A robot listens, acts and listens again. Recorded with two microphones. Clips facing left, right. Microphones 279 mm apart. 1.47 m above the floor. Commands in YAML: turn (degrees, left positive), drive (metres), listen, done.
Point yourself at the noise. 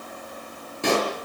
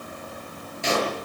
turn: 60
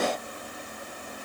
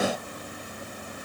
listen: true
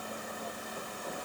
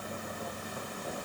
done: "I heard a pop, but can't make it out now. It was about straight ahead or 60° left."